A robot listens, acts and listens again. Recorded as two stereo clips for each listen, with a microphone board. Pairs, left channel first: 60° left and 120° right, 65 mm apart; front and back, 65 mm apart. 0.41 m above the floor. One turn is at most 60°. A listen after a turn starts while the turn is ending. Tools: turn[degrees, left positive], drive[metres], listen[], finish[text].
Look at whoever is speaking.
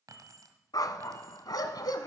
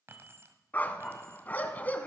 Action: listen[]
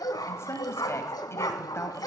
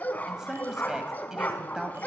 Thought: The woman speaking: 100° left.
Action: turn[60]
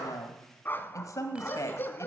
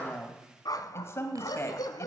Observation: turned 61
Thought: The woman speaking is now 40° left.
Action: turn[40]
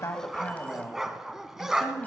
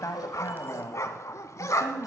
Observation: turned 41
Action: finish[Facing the woman speaking.]